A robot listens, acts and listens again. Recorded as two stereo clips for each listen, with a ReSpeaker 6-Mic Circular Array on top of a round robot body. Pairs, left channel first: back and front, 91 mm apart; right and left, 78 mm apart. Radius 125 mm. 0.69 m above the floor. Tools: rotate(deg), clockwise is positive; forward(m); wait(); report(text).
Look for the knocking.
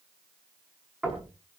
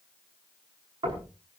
rotate(-80)
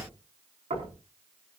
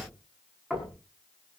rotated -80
report("Found it: knocking, straight ahead, over 4 m away.")